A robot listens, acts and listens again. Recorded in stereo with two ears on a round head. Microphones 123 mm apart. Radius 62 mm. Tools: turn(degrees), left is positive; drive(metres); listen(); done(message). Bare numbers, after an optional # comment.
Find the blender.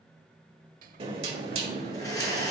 # The blender: about 25° left or 155° left.
turn(25)
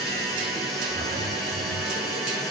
done("Found it: a blender, straight ahead, 2 to 4 m away.")